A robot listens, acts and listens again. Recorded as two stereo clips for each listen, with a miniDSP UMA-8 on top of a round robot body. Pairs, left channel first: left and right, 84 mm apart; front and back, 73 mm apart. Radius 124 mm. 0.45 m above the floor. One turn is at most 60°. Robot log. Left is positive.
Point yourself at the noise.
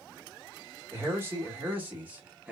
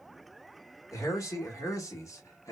note: The man speaking: 20° right.
cmd yaw -20
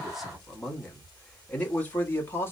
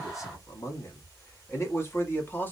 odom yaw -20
note: The man speaking is now 45° left.
cmd yaw +45
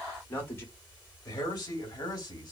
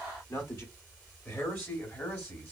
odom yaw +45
note: The man speaking is now 55° left.
cmd yaw +55
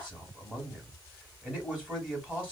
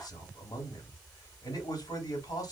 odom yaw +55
note: The man speaking is now 15° right.
cmd yaw -15
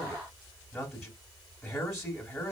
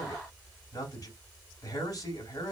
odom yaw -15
end: Found it: a man speaking, straight ahead, 1 to 2 m away.